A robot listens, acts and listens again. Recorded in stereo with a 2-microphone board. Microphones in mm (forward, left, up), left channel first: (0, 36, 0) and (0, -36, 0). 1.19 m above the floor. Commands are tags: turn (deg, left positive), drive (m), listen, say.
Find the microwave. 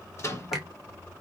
<turn deg="40"/>
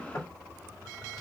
<listen/>
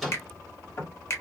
<listen/>
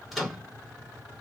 <say>Found it: a microwave, straight ahead, 1 to 2 m away.</say>